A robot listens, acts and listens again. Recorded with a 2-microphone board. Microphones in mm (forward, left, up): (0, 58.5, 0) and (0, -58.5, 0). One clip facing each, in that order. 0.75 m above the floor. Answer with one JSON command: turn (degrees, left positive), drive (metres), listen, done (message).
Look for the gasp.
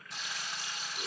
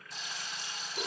{"listen": true}
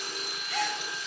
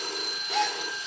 {"turn": -25}
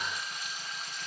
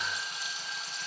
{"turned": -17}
{"listen": true}
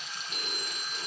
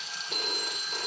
{"done": "I heard a gasp, but can't make it out now. It was about 10° right or 140° right."}